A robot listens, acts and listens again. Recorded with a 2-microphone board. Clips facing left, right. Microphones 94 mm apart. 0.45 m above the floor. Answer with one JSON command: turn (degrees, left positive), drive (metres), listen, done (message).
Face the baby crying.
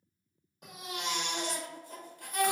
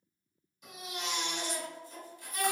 {"turn": 55}
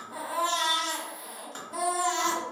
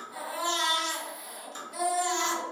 {"turn": 45}
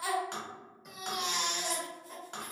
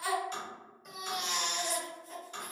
{"done": "Found it: a baby crying, straight ahead."}